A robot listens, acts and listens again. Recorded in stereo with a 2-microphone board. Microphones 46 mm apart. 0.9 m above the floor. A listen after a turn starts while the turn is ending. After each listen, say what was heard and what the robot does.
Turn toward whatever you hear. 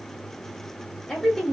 Turn 30° left.
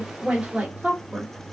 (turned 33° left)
So it is at 35° right. Turn 35° right.
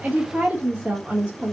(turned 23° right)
The woman speaking is now 40° right. Turn 40° right.
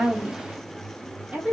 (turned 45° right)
The woman speaking is now 30° right. Turn 30° right.
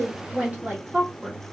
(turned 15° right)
The woman speaking is now 30° right. Turn 30° right.
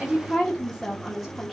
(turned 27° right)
Found it: a woman speaking, straight ahead, 1 to 2 m away.